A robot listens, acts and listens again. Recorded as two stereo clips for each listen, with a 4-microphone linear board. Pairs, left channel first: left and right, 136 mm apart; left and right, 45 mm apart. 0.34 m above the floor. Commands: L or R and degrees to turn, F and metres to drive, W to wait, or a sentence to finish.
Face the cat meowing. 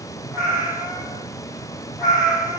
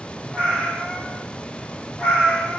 L30
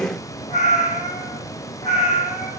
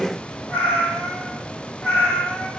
L125
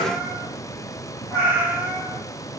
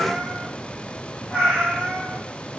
R20
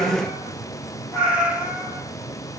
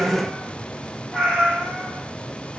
Found it: a cat meowing, straight ahead, 2 to 4 m away.